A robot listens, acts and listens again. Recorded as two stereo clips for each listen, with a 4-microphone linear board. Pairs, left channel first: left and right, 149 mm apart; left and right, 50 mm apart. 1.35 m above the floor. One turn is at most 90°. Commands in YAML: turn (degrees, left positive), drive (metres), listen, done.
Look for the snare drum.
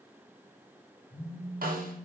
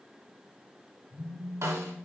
turn: -70
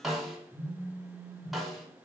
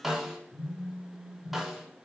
done: "Facing the snare drum."